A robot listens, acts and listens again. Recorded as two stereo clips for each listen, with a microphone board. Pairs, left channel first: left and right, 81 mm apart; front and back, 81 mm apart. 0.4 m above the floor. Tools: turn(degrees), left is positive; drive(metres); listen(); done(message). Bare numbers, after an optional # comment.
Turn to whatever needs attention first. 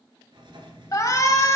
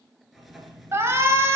# The shout: 130° left.
turn(130)
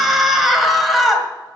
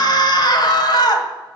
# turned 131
done("Facing the shout.")